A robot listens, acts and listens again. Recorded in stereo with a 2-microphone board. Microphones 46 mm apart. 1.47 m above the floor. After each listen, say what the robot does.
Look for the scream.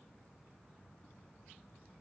Keep listening.
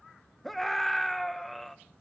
Turn 30° left.
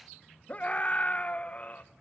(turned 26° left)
Turn 150° left.
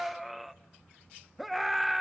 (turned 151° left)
Facing the scream, 1 to 2 m away.